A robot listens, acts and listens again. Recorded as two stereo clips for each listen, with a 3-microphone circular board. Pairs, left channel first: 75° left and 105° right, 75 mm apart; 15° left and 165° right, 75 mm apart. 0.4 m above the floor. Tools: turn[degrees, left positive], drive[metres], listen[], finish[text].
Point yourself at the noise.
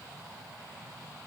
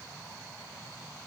Action: listen[]
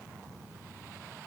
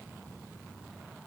Action: listen[]
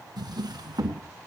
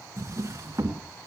Thought: The drawer: 120° right.
Action: turn[-120]
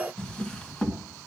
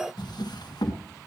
Action: finish[Found it: a drawer, straight ahead, 1 to 2 m away.]